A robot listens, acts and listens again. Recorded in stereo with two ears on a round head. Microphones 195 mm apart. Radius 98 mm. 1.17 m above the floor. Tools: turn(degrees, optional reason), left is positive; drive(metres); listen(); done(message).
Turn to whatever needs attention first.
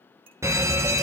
turn(degrees=-30)
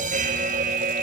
turn(degrees=-135, reason="So it is at 135° right.")
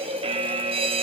turn(degrees=-30, reason="The fire alarm is now 30° right.")
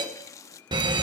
turn(degrees=-25, reason="The fire alarm is now 25° right.")
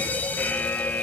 turn(degrees=10, reason="The fire alarm is now 10° left.")
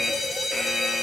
done("Found it: a fire alarm, straight ahead, 1 to 2 m away.")